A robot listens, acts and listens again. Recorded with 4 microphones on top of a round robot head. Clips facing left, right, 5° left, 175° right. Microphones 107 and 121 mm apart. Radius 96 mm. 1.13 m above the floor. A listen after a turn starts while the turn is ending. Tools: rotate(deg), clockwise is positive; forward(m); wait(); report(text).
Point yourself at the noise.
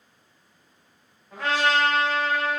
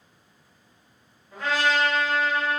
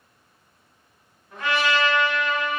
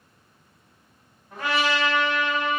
rotate(-130)
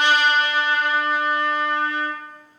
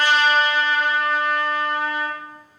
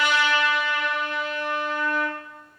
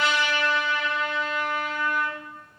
rotate(10)
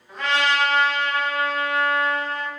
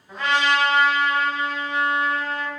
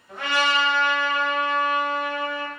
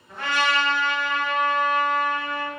report("Facing the trumpet, 1 to 2 m away.")